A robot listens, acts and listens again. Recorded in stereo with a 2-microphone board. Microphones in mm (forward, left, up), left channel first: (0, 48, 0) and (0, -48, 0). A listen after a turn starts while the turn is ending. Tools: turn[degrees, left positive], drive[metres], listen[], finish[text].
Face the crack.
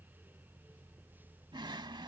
Action: listen[]
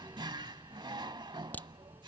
Thought: The crack: about 15° left or 165° left.
Action: turn[15]
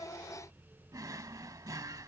Action: listen[]
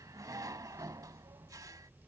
Action: finish[I heard a crack, but can't make it out now. It was about straight ahead or 150° left.]